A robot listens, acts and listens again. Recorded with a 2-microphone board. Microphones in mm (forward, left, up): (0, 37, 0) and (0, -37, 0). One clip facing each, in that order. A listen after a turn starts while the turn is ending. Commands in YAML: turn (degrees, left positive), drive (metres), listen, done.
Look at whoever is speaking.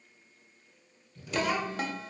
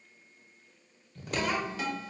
turn: 30
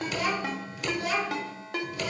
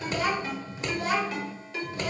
turn: -35
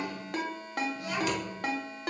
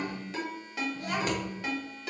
turn: -45
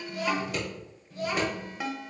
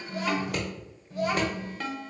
turn: -40
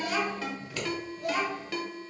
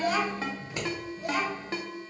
done: "Facing the child speaking."